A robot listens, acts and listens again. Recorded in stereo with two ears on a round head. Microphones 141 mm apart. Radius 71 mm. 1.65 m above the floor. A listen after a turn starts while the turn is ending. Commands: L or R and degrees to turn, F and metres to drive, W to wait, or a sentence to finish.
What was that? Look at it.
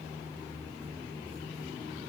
W
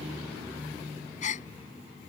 L50
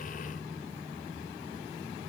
W
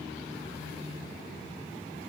I heard a gasp, but can't make it out now. It was about straight ahead or 80° left.